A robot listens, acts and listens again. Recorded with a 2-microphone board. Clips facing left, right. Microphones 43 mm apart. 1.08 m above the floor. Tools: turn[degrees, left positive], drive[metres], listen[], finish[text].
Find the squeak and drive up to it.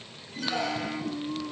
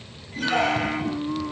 Thought: The squeak: about 55° right or 125° right.
Action: turn[-55]
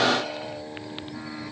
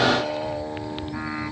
Action: listen[]
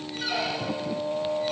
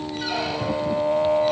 Action: drive[1.0]
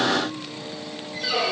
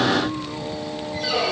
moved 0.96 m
Action: drive[1.0]
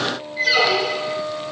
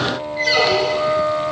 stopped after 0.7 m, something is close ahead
Action: finish[Arrived at the squeak, straight ahead.]